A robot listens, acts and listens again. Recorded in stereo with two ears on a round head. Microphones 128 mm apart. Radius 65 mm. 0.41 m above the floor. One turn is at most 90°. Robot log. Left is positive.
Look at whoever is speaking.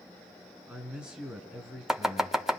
cmd yaw -30
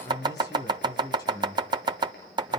note: So it is at 25° left.
cmd yaw +25
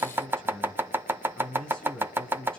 end: Facing the man speaking, over 4 m away.